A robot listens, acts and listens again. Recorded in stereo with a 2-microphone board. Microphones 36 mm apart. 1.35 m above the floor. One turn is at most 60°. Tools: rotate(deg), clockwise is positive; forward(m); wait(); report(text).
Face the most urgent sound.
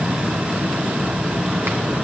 wait()
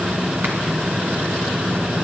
wait()
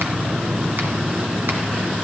report("I can't make out anything urgent.")